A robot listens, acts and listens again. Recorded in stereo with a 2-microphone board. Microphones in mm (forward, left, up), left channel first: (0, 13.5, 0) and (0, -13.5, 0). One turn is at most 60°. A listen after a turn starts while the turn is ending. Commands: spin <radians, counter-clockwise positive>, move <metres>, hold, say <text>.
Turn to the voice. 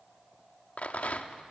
hold
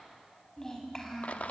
spin 0.35
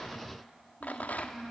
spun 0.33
say Found it: a child speaking, straight ahead, over 4 m away.